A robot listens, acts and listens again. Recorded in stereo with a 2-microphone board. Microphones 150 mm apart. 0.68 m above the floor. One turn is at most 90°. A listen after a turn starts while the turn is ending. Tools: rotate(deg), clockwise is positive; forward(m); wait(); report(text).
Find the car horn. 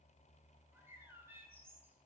wait()
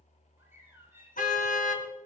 rotate(-60)
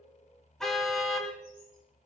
report("Facing the car horn, 2 to 4 m away.")